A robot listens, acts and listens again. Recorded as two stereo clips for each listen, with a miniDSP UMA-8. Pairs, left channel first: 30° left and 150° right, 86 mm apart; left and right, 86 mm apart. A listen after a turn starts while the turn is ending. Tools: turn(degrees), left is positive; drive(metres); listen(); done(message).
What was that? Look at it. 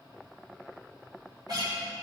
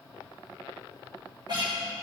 turn(degrees=-115)
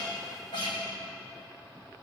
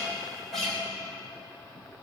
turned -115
done("Facing the guitar, 2 to 4 m away.")